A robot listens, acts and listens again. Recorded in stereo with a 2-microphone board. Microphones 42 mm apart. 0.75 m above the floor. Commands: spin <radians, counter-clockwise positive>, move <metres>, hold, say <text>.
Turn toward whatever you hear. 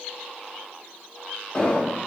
spin 0.61
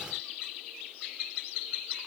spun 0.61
hold
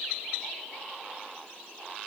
say I heard an explosion, but can't make it out now. It was about straight ahead or 110° left.